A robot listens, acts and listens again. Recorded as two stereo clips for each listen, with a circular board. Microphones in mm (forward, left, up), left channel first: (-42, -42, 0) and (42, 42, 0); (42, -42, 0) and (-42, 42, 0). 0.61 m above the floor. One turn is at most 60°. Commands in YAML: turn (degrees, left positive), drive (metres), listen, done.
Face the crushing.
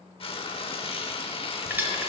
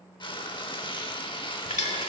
turn: -30
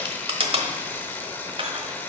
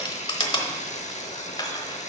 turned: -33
done: "Found it: crushing, straight ahead."